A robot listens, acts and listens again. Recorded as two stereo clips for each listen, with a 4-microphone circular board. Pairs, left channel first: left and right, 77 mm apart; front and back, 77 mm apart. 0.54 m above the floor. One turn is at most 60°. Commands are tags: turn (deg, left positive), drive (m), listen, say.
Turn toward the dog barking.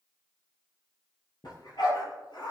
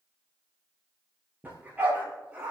<turn deg="60"/>
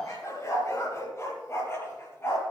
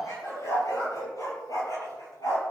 <turn deg="30"/>
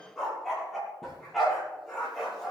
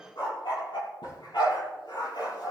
<say>Found it: a dog barking, straight ahead, over 4 m away.</say>